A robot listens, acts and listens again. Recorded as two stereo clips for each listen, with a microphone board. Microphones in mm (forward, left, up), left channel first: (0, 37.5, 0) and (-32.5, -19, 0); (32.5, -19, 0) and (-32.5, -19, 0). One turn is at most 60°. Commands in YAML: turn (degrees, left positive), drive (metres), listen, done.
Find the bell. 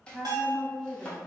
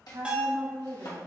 turn: -60
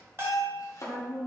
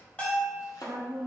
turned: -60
turn: -60
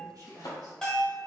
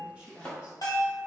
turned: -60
turn: -25
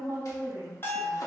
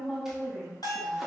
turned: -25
done: "Found it: a bell, straight ahead, 1 to 2 m away."